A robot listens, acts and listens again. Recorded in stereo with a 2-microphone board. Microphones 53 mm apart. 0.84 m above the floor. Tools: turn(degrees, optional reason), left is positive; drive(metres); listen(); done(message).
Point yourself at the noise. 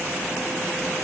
listen()
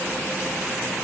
listen()
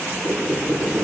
turn(degrees=-55, reason="The squeak: about 55° right or 125° right.")
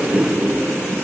turn(degrees=-65, reason="So it is at 65° right.")
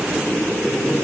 done("Found it: a squeak, straight ahead, over 4 m away.")